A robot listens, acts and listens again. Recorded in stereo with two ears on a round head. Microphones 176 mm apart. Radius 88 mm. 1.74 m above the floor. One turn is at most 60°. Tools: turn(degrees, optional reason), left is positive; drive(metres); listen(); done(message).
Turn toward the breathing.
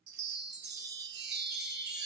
listen()
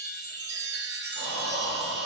turn(degrees=-60, reason="The breathing: about 65° right or 115° right.")
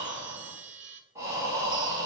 turn(degrees=-15, reason="So it is at 15° right.")
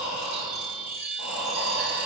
done("Found it: breathing, straight ahead, 1 to 2 m away.")